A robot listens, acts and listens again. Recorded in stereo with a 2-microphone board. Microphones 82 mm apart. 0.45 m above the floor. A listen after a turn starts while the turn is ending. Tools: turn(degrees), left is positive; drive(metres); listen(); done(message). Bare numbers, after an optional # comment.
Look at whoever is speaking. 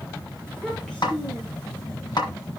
turn(30)
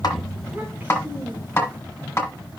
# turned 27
# So it is at 20° right.
turn(-20)
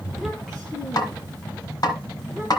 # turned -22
done("Found it: a child speaking, straight ahead.")